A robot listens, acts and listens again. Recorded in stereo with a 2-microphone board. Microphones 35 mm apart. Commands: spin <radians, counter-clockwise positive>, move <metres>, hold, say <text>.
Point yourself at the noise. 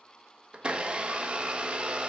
spin -0.52
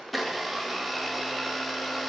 say Facing the blender.